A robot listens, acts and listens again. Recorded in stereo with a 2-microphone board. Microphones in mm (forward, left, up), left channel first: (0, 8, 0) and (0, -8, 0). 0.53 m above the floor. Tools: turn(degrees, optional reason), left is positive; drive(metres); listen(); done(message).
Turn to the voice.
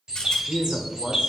turn(degrees=-40, reason="The man speaking: about 40° right or 140° right.")
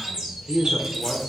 turn(degrees=-45, reason="The man speaking: about 45° right or 135° right.")
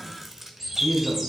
turn(degrees=-40, reason="The man speaking: about 40° right or 140° right.")
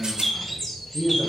turn(degrees=-20, reason="So it is at 20° right.")
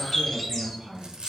done("Found it: a man speaking, straight ahead, 2 to 4 m away.")